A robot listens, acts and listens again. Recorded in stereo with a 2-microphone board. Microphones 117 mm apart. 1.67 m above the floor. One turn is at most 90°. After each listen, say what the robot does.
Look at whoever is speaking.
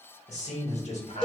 Turn 65° left.
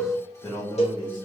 Turn 35° left.
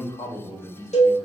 Turn 35° left.
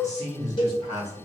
Turn 35° left.
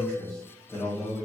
Facing the man speaking, 1 to 2 m away.